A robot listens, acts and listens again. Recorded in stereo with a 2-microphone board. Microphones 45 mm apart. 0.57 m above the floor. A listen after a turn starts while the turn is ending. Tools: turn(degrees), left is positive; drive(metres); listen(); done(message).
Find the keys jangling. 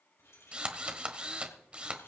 turn(degrees=90)
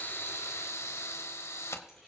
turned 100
done("Facing the keys jangling.")